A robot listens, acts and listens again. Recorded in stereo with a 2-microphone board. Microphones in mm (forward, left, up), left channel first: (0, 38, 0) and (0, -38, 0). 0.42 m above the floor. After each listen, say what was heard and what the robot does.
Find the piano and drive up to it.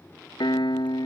Turn 90° left.
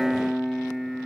Drive 1.0 m forward.
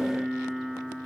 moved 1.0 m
Drive 1.0 m forward.
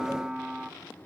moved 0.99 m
The piano is now 10° right. Turn 10° right.
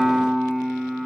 Drive 1.0 m forward.
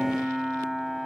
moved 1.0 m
Drive 1.0 m forward.
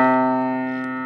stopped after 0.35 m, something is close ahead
I am next to the piano.